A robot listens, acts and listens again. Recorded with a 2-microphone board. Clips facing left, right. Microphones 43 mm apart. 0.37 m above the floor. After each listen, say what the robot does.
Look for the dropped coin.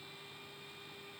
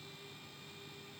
Keep listening.
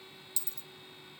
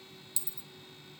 Turn 15° right.
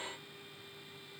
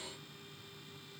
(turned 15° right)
Keep listening.
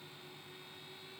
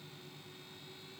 I heard a dropped coin, but can't make it out now. It was about straight ahead or 150° right.